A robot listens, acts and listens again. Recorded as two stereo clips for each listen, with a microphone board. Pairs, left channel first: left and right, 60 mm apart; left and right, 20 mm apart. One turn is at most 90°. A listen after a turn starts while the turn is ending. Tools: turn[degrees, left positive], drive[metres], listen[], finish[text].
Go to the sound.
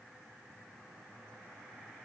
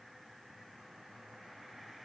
Action: listen[]
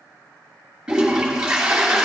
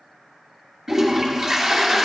Action: turn[-30]
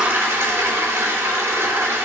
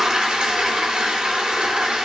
Thought: So it is at 135° right.
Action: turn[-90]
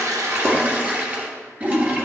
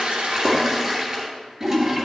Thought: The toilet flushing is now 30° right.
Action: turn[-30]
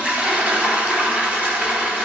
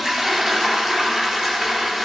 Thought: The toilet flushing is now 30° right.
Action: turn[-30]
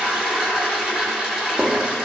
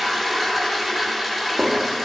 Thought: The toilet flushing is now 15° right.
Action: turn[-15]
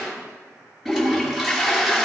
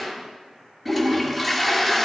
Action: drive[1.0]
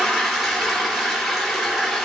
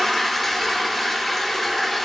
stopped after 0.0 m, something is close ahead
Action: finish[Blocked. The toilet flushing is further on, straight ahead.]